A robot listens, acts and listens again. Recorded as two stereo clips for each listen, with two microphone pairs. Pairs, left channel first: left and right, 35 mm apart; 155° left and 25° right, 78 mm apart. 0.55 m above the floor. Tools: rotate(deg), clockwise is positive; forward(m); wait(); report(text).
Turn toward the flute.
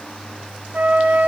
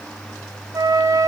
rotate(60)
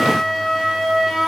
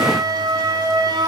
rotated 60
report("Found it: a flute, straight ahead.")